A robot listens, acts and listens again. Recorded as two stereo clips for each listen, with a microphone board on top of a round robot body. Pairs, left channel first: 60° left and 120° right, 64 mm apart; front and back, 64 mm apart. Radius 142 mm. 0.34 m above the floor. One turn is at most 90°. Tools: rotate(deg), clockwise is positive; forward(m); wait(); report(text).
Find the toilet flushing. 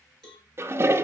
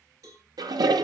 rotate(90)
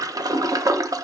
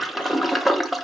rotate(90)
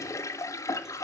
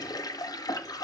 rotate(-20)
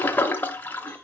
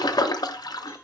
report("Found it: a toilet flushing, straight ahead.")